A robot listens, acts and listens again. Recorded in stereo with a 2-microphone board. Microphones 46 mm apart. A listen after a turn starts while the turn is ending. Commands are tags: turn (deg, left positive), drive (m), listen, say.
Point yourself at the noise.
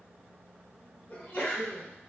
<turn deg="45"/>
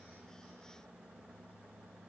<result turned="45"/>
<listen/>
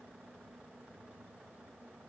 <say>I heard a sneeze, but can't make it out now. It was about straight ahead or 90° left.</say>